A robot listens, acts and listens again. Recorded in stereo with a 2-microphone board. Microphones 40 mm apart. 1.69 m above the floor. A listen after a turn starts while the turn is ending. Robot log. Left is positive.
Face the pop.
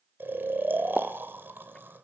cmd yaw +30
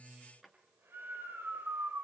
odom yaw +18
cmd idle
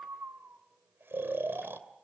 end: I heard a pop, but can't make it out now. It was about 20° right or 160° left.